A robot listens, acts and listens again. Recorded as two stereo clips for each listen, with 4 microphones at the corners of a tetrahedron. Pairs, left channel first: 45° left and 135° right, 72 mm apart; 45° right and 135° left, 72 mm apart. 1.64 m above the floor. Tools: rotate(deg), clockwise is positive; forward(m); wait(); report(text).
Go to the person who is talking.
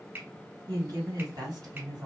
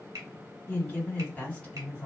rotate(120)
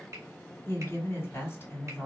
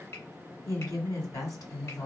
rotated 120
rotate(15)
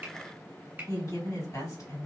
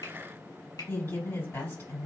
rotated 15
forward(1.0)
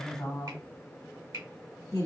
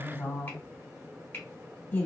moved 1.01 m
rotate(-10)
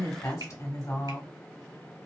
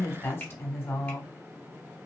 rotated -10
forward(1.0)
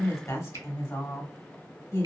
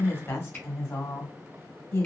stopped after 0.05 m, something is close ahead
report("I am next to the woman speaking.")